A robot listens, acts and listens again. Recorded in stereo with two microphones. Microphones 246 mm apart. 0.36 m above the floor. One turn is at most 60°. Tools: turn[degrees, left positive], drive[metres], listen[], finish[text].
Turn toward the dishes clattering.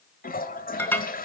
Action: turn[30]
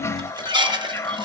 Thought: So it is at 20° right.
Action: turn[-20]
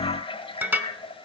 Thought: The dishes clattering is now 10° right.
Action: turn[-10]
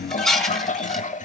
Action: finish[Facing the dishes clattering, 1 to 2 m away.]